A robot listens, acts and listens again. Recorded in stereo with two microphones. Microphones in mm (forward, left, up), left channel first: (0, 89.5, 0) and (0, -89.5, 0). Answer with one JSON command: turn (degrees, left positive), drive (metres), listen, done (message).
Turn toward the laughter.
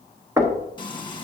{"listen": true}
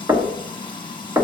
{"listen": true}
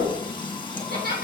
{"turn": -55}
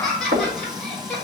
{"done": "Facing the laughter."}